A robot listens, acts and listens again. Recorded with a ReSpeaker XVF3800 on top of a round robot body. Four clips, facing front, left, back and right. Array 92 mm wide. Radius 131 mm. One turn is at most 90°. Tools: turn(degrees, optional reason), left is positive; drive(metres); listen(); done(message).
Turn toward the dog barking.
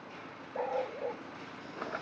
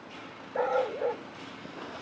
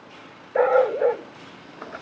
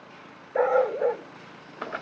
turn(degrees=-90, reason="The dog barking: 160° right.")
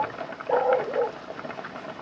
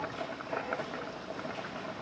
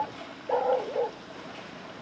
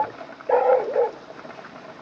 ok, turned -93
turn(degrees=-80, reason="The dog barking is now 80° right.")
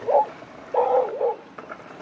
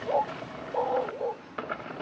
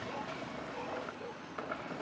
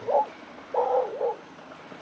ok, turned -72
turn(degrees=-15, reason="The dog barking is now 15° right.")
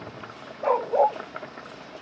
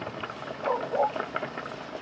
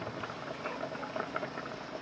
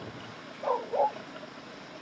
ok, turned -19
done("Facing the dog barking.")